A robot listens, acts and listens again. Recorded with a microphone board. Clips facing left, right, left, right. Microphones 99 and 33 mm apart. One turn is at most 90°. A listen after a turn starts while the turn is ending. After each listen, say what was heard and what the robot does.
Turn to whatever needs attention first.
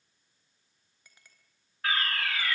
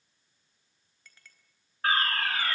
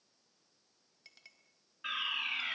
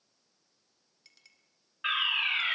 The fire alarm: about 40° right or 140° right. Turn 40° right.
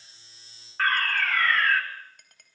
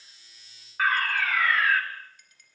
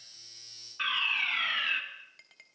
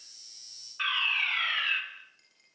Found it: a fire alarm, straight ahead, 2 to 4 m away.